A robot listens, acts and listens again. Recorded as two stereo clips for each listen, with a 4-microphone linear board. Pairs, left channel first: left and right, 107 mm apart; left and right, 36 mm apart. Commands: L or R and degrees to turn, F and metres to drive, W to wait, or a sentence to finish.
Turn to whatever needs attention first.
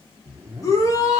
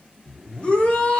L30
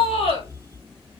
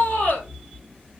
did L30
L115
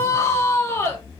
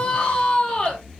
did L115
L30
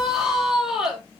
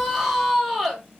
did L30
Facing the shout.